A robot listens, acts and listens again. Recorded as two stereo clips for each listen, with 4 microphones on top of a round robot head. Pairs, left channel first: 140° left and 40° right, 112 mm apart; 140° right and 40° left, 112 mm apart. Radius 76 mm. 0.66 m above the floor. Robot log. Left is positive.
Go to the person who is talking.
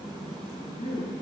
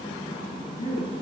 note: The woman speaking: straight behind.
cmd yaw +180
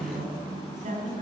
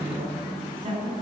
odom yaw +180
note: The woman speaking is now 10° right.
cmd yaw -10
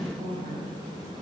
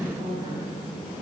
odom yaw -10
cmd fwd 1.0
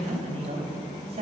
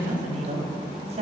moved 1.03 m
cmd fwd 1.0
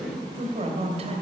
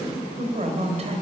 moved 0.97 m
cmd fwd 1.0
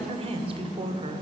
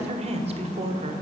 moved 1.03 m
cmd fwd 1.0
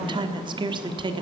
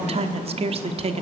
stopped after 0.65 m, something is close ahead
note: The woman speaking is now 10° left.
cmd yaw +10
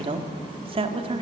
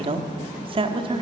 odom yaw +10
end: I am next to the woman speaking.